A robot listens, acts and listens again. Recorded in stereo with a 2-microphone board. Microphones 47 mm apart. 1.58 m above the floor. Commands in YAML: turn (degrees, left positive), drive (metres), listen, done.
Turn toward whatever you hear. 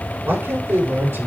turn: -55
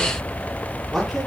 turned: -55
done: "Facing the man speaking."